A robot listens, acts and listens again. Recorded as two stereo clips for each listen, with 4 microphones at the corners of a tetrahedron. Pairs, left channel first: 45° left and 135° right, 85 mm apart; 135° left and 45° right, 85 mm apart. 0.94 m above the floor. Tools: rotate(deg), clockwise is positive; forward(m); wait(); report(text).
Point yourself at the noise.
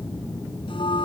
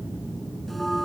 rotate(-45)
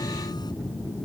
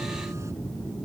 wait()
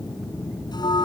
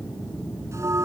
rotate(-10)
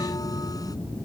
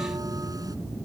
wait()
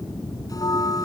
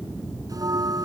report("Facing the bell.")